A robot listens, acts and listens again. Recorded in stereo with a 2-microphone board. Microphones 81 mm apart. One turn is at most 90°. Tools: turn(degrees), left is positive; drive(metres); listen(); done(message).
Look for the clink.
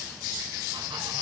listen()
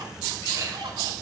turn(degrees=-45)
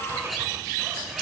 done("Found it: a clink, straight ahead.")